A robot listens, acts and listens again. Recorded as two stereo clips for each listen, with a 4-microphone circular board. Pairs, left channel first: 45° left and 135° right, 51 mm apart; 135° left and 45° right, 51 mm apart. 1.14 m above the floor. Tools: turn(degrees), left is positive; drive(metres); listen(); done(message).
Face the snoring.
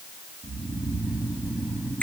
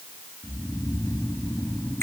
turn(degrees=160)
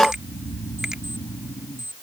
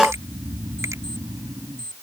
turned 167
done("Facing the snoring.")